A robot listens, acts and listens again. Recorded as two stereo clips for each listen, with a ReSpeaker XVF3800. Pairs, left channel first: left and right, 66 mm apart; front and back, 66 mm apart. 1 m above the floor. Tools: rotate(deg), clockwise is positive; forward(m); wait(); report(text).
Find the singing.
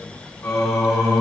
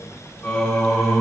rotate(-85)
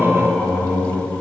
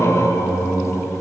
rotate(-30)
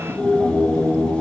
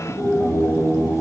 rotate(-35)
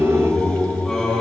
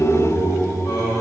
rotate(-10)
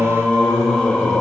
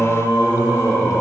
report("Facing the singing, 2 to 4 m away.")